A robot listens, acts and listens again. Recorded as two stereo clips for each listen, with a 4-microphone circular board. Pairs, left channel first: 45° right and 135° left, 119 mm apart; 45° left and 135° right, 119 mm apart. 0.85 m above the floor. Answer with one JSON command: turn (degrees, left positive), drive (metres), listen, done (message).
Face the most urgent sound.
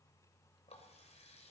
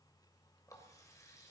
{"listen": true}
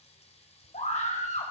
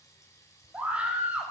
{"turn": -55}
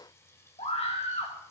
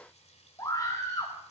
{"turn": -15}
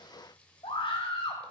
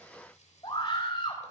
{"done": "Facing the scream, over 4 m away."}